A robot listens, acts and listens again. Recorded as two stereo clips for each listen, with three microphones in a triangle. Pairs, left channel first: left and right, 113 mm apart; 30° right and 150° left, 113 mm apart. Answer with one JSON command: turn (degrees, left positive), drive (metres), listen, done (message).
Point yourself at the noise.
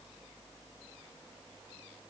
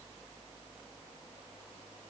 {"listen": true}
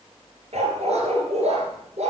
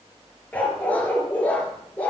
{"turn": -105}
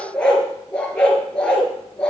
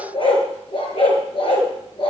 {"turn": 10}
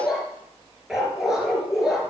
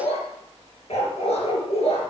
{"done": "Found it: a dog barking, straight ahead."}